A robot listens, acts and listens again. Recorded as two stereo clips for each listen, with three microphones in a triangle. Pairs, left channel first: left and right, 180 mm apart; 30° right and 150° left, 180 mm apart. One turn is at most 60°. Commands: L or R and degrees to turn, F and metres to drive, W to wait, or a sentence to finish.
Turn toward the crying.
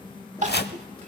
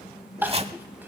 R60
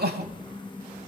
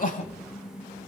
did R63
R60
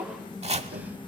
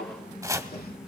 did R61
R10
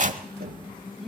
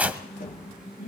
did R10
Found it: crying, straight ahead.